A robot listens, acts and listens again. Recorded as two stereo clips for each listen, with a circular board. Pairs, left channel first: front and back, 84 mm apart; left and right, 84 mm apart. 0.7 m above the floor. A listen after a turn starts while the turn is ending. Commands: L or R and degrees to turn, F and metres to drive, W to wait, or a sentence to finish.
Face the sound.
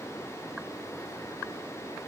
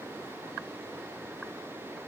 W
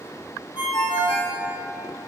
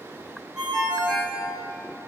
R10
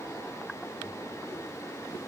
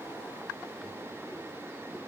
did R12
W
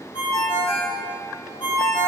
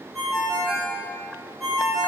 Facing the ringtone, 1 to 2 m away.